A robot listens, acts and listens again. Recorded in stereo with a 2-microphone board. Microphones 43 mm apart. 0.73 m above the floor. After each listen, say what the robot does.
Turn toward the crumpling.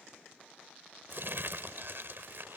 Turn 60° right.
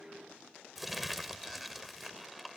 Found it: crumpling, straight ahead.